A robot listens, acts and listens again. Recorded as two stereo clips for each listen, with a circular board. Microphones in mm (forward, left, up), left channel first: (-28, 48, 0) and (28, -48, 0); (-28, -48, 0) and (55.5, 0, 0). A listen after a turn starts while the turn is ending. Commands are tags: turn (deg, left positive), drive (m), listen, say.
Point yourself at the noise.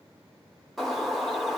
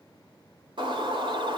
<turn deg="30"/>
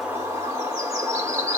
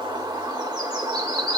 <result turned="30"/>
<say>Facing the bird, 1 to 2 m away.</say>